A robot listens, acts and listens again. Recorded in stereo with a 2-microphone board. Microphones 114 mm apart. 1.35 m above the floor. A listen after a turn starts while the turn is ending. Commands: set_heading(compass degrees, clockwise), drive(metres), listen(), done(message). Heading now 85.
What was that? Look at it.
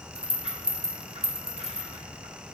set_heading(145)
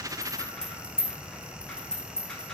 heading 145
done("Facing the rattle.")